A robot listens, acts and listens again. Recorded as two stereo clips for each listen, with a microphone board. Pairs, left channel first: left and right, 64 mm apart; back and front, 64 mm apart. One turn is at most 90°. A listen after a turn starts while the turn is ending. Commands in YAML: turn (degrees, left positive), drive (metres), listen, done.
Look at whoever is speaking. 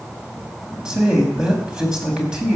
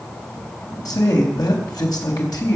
turn: -90
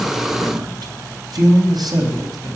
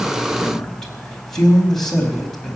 turn: -90
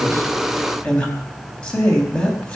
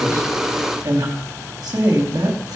turn: 15
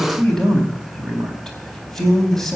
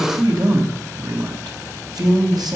done: "Facing the man speaking, over 4 m away."